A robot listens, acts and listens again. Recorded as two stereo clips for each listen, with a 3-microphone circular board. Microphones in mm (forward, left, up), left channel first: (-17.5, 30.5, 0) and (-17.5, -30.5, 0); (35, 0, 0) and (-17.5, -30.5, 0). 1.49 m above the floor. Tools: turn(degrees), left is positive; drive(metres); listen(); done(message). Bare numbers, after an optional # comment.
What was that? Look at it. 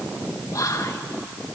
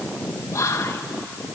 # The whispering: 65° left.
turn(65)
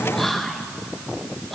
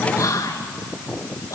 done("Found it: whispering, straight ahead, 1 to 2 m away.")